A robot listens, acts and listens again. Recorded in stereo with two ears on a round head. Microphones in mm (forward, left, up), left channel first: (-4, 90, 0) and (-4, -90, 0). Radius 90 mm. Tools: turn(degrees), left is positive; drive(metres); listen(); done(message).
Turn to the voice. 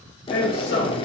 turn(degrees=55)
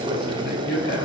turn(degrees=60)
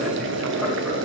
listen()
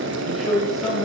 done("Facing the man speaking.")